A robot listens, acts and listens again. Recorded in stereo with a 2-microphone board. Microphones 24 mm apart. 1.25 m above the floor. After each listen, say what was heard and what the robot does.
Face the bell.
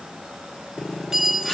The bell: about 20° right or 160° right. Turn 20° right.
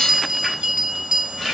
So it is at 140° right. Turn 140° right.
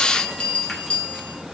The bell is now 45° left. Turn 45° left.
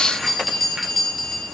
The bell is now 10° left. Turn 10° left.
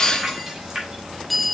Facing the bell.